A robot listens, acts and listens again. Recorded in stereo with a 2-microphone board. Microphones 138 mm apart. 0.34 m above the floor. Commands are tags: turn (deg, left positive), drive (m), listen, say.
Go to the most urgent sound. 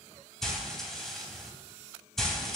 <listen/>
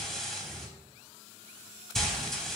<listen/>
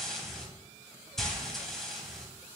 <say>I can't make out anything urgent to turn to.</say>